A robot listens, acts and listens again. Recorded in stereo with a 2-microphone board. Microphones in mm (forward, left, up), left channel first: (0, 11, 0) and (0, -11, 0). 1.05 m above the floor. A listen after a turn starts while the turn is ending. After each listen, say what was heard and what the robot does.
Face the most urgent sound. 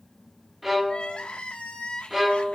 The crying: about 60° left or 120° left. Turn 60° left.
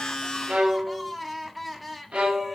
Facing the crying, 1 to 2 m away.